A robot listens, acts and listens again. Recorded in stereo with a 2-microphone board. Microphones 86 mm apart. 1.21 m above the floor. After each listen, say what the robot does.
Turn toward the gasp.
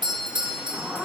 Turn 15° right.
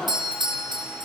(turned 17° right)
Facing the gasp.